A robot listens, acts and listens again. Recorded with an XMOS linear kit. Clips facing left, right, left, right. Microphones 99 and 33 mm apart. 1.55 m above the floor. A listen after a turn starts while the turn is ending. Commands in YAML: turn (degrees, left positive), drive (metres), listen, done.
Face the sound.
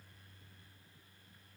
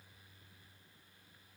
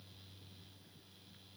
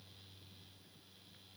listen: true
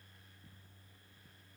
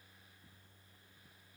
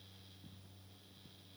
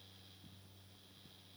listen: true
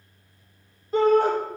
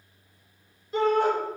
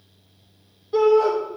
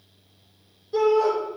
turn: 45
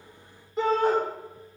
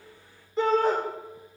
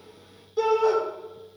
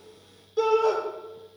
done: "Found it: a shout, straight ahead."